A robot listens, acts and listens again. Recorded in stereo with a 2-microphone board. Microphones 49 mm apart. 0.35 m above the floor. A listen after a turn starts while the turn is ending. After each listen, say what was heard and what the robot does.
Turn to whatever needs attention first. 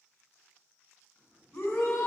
The shout: about 60° left or 120° left. Turn 60° left.
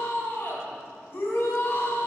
So it is at 45° left. Turn 45° left.
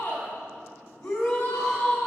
The shout is now 20° left. Turn 20° left.
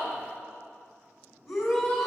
Facing the shout, 2 to 4 m away.